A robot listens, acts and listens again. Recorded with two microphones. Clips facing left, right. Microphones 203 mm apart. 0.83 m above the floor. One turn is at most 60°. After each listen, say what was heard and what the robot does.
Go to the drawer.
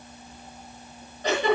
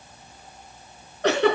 Keep listening.
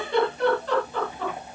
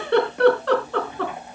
Keep listening.
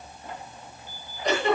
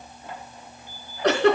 I can't make out a drawer, only a giggle.